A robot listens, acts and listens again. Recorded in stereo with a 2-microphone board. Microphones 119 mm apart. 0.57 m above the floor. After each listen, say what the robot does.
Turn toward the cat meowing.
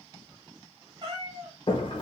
Turn 40° right.
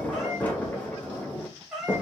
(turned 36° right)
Facing the cat meowing.